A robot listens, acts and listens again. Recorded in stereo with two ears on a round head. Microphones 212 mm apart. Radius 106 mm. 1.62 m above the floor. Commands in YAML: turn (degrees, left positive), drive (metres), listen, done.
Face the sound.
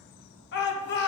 turn: 50
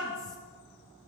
listen: true
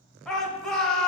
done: "Facing the shout."